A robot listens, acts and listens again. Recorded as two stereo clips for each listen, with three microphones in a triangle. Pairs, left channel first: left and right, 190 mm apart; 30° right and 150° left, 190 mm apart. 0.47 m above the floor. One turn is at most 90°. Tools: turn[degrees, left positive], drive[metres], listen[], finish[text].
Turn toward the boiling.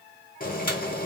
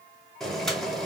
Thought: The boiling: 55° left.
Action: turn[55]
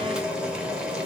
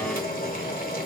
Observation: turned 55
Action: finish[Found it: boiling, straight ahead.]